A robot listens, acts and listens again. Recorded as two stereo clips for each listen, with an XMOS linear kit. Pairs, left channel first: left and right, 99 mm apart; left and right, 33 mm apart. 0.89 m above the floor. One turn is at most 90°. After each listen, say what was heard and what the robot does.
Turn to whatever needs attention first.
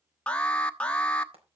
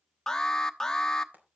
Turn 30° left.
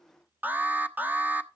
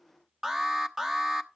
So it is at 15° right. Turn 15° right.
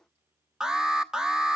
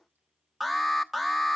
Facing the alarm, 1 to 2 m away.